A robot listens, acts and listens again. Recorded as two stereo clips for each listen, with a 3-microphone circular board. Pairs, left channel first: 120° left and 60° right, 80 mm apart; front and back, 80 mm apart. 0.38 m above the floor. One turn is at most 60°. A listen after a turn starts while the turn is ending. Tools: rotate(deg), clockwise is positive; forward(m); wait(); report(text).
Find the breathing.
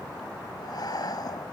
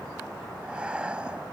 rotate(-60)
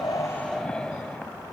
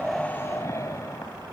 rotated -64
rotate(-45)
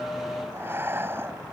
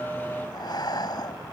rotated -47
report("Facing the breathing.")